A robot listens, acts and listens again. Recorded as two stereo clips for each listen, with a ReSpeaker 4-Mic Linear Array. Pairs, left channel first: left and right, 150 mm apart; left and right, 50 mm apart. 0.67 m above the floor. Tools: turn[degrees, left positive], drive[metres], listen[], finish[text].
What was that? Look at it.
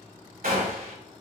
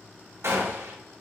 Thought: The gunshot: about 75° right or 105° right.
Action: turn[-75]
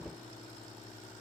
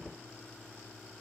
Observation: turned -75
Action: listen[]
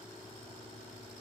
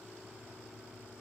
Action: finish[I heard a gunshot, but can't make it out now. It was about straight ahead or 30° right.]